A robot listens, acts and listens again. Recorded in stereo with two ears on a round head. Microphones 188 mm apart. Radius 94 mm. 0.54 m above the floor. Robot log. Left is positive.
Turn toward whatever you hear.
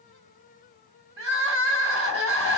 note: The crying: about 55° right or 125° right.
cmd yaw -55
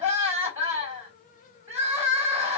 note: So it is at 10° right.
cmd yaw -10
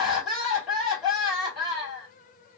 end: Found it: crying, straight ahead.